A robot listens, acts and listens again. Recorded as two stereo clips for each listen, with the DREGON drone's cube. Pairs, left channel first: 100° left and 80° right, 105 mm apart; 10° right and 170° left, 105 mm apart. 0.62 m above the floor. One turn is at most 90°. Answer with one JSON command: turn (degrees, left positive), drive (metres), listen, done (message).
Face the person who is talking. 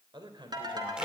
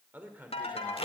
{"turn": -90}
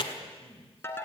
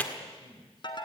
{"turn": -50}
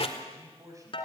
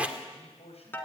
{"turn": -20}
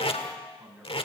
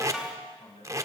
{"done": "Facing the man speaking, over 4 m away."}